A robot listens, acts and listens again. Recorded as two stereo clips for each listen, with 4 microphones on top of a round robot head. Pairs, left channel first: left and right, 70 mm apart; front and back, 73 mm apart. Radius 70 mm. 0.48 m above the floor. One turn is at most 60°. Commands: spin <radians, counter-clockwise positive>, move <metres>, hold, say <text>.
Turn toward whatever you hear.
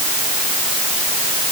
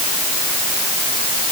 hold
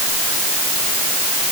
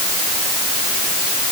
hold
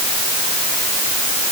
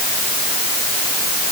say I can't make out anything.